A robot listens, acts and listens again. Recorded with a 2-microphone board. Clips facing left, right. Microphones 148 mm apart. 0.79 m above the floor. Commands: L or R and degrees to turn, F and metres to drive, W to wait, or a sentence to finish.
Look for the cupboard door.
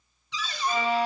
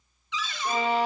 L35
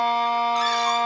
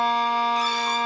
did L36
W
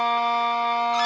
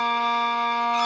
W
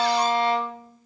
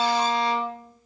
I heard a cupboard door, but can't make it out now. It was about straight ahead or 110° left.